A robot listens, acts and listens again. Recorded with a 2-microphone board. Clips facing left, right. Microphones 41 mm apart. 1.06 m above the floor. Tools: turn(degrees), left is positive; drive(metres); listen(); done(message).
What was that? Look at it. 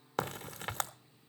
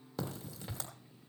turn(degrees=60)
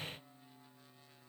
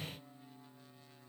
listen()
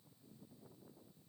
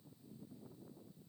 done("I heard a crack, but can't make it out now. It was about straight ahead or 60° left.")